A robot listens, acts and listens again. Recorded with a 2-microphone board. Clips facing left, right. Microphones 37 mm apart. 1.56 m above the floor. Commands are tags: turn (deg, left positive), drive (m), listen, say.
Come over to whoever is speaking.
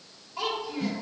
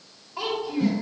<turn deg="-25"/>
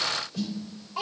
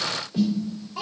<drive m="1.0"/>
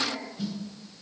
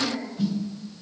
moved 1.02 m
<drive m="1.0"/>
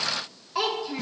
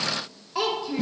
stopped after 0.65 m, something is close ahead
<say>I am next to the child speaking.</say>